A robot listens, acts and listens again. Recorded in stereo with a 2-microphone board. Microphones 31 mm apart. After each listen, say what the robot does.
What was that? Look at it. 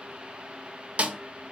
Turn 45° right.
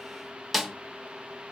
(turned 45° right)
Facing the snare drum, under 1 m away.